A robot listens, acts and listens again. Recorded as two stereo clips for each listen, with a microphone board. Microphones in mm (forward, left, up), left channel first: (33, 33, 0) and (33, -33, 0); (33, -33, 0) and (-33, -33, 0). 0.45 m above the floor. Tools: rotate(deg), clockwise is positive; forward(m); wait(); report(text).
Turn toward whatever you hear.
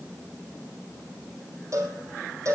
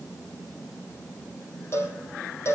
rotate(50)
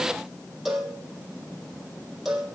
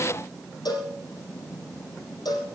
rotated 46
report("Facing the cowbell.")